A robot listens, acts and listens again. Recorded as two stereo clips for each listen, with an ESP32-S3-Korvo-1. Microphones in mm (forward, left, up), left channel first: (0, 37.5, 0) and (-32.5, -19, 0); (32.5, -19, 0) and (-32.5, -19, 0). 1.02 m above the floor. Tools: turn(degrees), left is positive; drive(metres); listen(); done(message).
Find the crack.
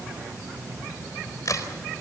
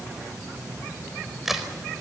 turn(degrees=95)
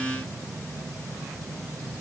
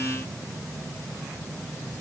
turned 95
done("I heard a crack from this way, but can't make it out now.")